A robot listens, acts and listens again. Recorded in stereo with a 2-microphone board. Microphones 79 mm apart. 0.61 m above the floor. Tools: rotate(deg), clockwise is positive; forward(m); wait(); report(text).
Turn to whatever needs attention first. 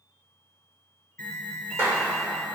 rotate(-20)
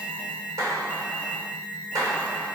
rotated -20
rotate(-135)
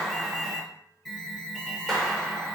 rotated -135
report("Facing the alarm.")